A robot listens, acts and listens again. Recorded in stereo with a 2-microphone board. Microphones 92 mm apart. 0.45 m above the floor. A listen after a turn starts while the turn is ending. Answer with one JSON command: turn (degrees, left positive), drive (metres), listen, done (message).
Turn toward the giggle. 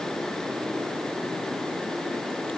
{"listen": true}
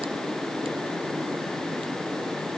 {"listen": true}
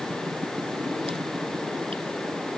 {"done": "I can't make out a giggle."}